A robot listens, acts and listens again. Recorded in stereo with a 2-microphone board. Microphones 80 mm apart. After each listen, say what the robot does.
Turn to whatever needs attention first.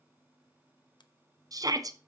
Turn 50° right.
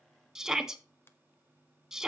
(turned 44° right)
Found it: a shout, straight ahead.